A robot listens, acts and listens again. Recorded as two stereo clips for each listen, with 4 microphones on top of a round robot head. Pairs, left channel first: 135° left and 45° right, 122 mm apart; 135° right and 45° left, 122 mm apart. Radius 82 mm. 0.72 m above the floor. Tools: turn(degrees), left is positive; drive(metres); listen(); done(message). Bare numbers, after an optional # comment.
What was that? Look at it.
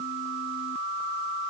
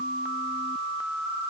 listen()
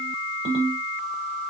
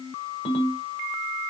# The ringtone: 90° right.
turn(-90)
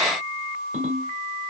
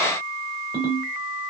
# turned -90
done("Found it: a ringtone, straight ahead, 1 to 2 m away.")